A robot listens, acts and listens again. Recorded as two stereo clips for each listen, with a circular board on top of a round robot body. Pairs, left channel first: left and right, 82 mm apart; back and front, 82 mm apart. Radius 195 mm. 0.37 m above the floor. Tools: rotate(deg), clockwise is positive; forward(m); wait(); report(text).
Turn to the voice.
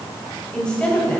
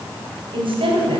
rotate(-10)
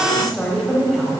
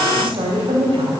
report("Found it: a woman speaking, straight ahead, 2 to 4 m away.")